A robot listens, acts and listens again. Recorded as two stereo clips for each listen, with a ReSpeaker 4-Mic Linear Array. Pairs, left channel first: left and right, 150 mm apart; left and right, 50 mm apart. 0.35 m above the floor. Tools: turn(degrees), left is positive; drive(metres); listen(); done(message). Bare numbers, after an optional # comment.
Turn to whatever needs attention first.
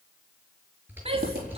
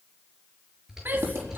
# The shout: about 40° right or 140° right.
turn(-40)
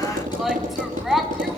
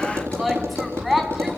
done("Facing the shout, 2 to 4 m away.")